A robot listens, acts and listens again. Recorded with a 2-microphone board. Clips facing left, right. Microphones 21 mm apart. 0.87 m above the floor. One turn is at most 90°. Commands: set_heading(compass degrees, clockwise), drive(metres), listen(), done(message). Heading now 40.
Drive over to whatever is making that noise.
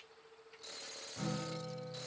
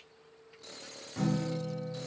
set_heading(80)
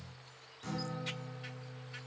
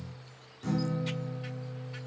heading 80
drive(1.0)
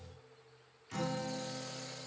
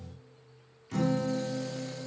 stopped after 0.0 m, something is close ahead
done("Blocked. The guitar is further on, straight ahead.")